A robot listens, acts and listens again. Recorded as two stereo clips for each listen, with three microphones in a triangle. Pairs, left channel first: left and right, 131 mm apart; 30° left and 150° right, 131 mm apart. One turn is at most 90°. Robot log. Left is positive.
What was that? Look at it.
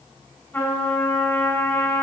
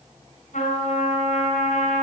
note: The trumpet: 15° left.
cmd yaw +15
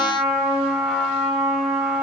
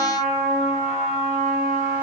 end: Facing the trumpet.